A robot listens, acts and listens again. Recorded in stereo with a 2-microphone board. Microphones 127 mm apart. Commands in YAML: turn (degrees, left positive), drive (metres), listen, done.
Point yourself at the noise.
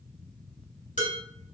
turn: 90
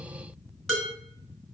done: "Facing the dishes clattering, 2 to 4 m away."